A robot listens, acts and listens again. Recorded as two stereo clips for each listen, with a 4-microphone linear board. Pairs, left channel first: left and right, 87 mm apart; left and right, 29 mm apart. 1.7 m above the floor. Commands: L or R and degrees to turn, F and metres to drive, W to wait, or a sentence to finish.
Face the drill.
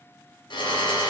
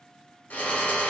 L75
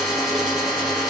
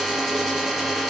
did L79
Facing the drill.